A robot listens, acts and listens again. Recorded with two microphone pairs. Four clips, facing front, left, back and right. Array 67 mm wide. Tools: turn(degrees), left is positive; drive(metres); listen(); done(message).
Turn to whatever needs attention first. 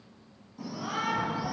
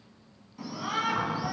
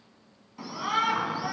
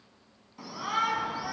turn(degrees=-160)
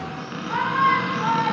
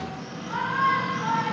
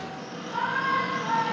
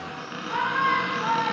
done("Found it: a shout, straight ahead.")